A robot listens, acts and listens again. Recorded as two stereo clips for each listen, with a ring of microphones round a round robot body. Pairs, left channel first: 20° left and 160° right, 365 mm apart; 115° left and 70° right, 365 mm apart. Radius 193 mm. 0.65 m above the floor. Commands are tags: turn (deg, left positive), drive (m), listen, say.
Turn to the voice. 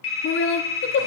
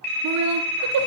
<turn deg="-30"/>
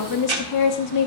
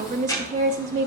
<say>Facing the woman speaking, under 1 m away.</say>